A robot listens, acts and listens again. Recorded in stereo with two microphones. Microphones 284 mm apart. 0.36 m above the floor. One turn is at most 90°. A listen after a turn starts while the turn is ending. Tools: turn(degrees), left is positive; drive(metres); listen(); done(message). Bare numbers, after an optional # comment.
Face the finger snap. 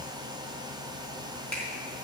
listen()
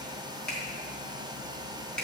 turn(30)
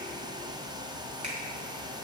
listen()
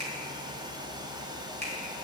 # So it is at 25° right.
turn(-25)
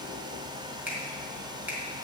done("Facing the finger snap.")